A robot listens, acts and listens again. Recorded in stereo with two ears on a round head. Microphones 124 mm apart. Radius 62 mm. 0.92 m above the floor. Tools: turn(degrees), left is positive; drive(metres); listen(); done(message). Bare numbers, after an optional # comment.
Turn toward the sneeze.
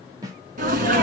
# The sneeze: about 60° right or 120° right.
turn(-60)
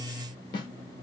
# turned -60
listen()
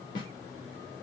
done("I heard a sneeze, but can't make it out now. It was about straight ahead or 60° right.")